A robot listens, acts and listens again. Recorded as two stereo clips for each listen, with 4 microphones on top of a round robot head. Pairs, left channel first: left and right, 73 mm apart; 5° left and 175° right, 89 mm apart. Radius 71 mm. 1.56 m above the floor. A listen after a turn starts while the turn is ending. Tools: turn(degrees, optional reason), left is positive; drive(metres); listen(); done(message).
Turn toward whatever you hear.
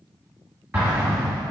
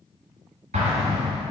turn(degrees=-170, reason="The explosion: 170° right.")
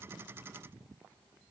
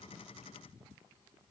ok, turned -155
turn(degrees=-15, reason="Nothing new. It was at 15° right.")
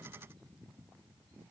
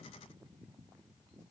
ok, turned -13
done("Facing where the explosion came from. I can't hear it now.")